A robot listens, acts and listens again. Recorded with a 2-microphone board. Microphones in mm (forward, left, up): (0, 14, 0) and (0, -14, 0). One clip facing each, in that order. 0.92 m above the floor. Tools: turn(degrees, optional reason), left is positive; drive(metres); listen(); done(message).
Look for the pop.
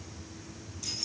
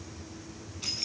listen()
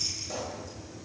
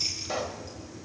turn(degrees=-40, reason="The pop: about 40° right or 140° right.")
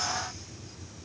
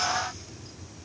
listen()
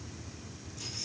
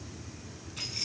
done("I heard a pop, but can't make it out now. It was about straight ahead or 100° right.")